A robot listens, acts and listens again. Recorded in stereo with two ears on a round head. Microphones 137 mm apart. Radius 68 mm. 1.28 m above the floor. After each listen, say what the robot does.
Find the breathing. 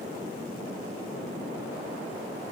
Keep listening.
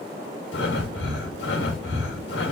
Turn 90° left.
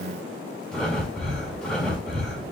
Facing the breathing.